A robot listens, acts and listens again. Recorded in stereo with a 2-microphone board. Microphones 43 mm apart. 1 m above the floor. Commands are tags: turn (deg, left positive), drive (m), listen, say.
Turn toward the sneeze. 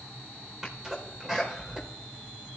<turn deg="-15"/>
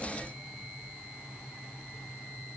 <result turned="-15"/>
<listen/>
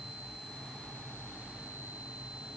<say>I heard a sneeze, but can't make it out now. It was about straight ahead or 150° right.</say>